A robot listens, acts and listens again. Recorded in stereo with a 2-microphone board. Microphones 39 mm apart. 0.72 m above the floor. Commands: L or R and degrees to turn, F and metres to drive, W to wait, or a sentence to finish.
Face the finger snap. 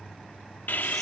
W
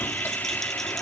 W
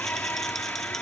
I can't make out a finger snap to turn to.